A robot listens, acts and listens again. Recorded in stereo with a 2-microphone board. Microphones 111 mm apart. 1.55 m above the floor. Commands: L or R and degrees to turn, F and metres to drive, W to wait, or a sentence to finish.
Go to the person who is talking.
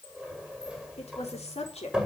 L70
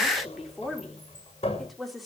F1.0
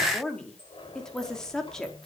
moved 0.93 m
F1.0
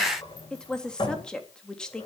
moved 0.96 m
L10
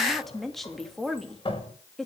F1.0
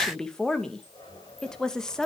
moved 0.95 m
F1.0
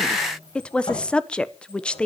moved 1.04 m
L10
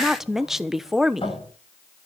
F1.0
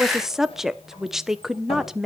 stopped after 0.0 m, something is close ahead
Arrived at the woman speaking, straight ahead.